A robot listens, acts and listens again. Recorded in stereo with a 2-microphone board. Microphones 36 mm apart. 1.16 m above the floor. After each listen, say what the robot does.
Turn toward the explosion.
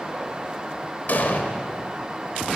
Turn 60° left.
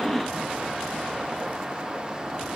Keep listening.
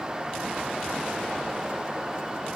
I heard an explosion, but can't make it out now. It was about straight ahead or 60° left.